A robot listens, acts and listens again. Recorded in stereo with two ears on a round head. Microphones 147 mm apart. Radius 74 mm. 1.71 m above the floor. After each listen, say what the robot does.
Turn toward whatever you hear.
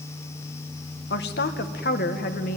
Turn 55° left.
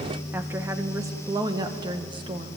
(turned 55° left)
Turn 30° right.
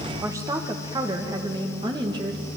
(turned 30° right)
Turn 25° right.
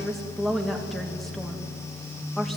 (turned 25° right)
Found it: a woman speaking, straight ahead, 2 to 4 m away.